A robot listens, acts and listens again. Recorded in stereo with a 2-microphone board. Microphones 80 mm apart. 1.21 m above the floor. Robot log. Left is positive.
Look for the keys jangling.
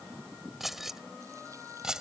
cmd yaw -30
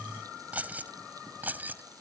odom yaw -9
note: The keys jangling: about 20° right or 160° right.
cmd yaw -20
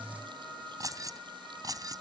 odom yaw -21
note: So it is at 135° right.
cmd yaw -135
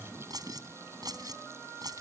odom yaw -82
note: The keys jangling is now 50° right.
cmd yaw -50
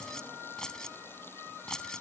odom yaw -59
note: The keys jangling is now 10° left.
cmd yaw +10
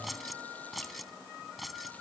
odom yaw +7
end: Facing the keys jangling.